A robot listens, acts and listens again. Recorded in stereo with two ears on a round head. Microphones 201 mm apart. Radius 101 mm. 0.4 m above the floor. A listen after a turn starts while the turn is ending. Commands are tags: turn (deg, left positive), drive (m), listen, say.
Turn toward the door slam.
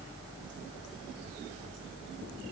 <listen/>
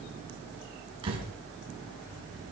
<turn deg="-25"/>
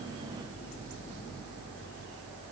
<listen/>
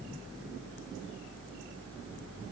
<say>I heard a door slam, but can't make it out now. It was about straight ahead or 130° right.</say>